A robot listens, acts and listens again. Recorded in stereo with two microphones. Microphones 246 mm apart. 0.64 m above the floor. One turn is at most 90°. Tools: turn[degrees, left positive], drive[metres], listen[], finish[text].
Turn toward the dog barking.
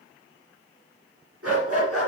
Thought: The dog barking: about 65° right or 115° right.
Action: turn[-65]
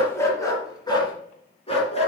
Thought: So it is at 25° left.
Action: turn[25]
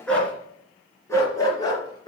Thought: The dog barking is now 20° left.
Action: turn[20]
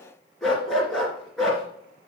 Action: finish[Found it: a dog barking, straight ahead.]